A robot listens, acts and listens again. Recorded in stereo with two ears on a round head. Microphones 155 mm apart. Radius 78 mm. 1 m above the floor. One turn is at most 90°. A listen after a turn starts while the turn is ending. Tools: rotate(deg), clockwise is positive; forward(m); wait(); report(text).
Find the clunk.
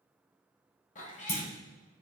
rotate(-40)
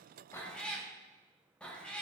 wait()
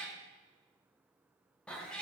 report("I heard a clunk, but can't make it out now. It was about straight ahead or 100° left.")